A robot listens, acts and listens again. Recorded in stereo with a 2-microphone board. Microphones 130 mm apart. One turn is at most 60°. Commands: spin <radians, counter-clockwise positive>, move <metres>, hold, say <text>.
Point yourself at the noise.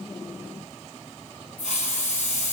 spin 1.05
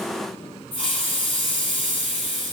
spin 0.79
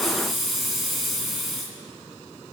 say Found it: a hiss, straight ahead.